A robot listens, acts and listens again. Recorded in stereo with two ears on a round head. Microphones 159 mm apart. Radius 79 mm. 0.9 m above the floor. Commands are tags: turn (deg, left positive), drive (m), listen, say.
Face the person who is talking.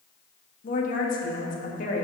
<turn deg="50"/>
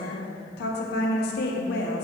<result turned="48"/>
<turn deg="75"/>
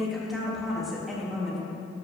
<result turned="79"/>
<say>Found it: a woman speaking, straight ahead, 1 to 2 m away.</say>